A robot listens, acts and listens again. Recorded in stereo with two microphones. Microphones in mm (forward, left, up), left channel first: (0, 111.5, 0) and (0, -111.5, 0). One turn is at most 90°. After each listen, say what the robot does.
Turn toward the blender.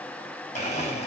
Turn 35° left.
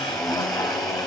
Found it: a blender, straight ahead.